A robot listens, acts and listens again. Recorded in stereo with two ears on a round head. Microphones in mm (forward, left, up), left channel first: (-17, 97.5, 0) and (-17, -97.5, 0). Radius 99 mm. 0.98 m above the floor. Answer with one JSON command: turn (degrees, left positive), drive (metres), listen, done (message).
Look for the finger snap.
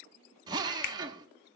{"turn": 50}
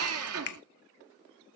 {"turn": 65}
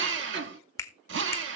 {"turn": 15}
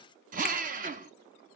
{"listen": true}
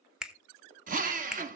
{"done": "Found it: a finger snap, straight ahead, 1 to 2 m away."}